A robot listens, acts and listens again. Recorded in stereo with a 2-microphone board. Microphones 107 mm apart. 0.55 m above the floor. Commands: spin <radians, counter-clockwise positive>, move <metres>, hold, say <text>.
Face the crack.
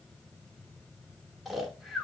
hold
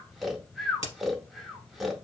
spin 1.31
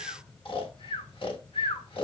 hold
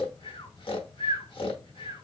say I heard a crack, but can't make it out now. It was about straight ahead or 30° left.